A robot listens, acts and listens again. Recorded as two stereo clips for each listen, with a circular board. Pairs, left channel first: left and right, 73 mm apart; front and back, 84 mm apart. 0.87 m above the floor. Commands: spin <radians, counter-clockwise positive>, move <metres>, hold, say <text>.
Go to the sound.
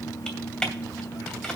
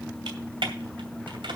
spin 2.97
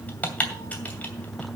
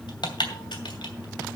spin 0.35
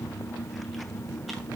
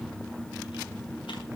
hold
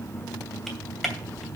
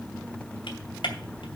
move 1.0
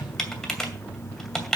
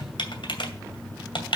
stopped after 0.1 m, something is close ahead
say Something is in my way. I am facing the typing on a keyboard but have not reached it.